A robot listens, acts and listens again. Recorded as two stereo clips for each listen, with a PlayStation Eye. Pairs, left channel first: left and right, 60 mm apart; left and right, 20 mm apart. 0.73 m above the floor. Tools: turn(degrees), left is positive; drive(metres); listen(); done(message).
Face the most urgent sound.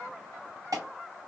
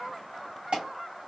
turn(degrees=-65)
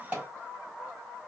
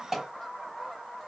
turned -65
turn(degrees=-30)
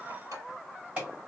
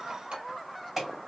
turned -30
turn(degrees=-25)
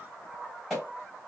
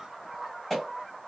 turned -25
done("Found it: an alarm, straight ahead.")